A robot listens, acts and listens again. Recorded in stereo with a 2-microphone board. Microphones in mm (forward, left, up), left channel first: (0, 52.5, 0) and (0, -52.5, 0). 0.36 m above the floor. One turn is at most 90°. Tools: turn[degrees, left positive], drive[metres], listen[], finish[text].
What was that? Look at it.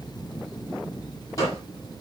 Thought: The gunshot: about 35° left or 145° left.
Action: turn[35]
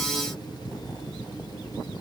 Action: listen[]
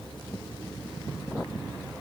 Action: finish[I heard a gunshot, but can't make it out now. It was about straight ahead or 110° left.]